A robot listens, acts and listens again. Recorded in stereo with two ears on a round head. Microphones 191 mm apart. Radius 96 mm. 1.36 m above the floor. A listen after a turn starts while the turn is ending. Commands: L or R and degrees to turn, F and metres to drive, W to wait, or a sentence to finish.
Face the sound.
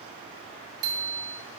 R90
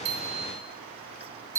R15
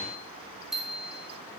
Facing the bicycle bell.